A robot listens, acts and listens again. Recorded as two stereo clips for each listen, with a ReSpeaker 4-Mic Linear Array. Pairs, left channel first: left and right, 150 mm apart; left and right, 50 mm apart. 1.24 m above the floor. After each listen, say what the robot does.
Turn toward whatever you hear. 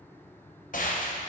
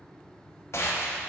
Turn 65° left.
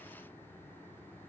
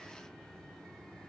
Keep listening.
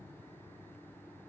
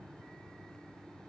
I heard a gunshot, but can't make it out now. It was about straight ahead or 50° left.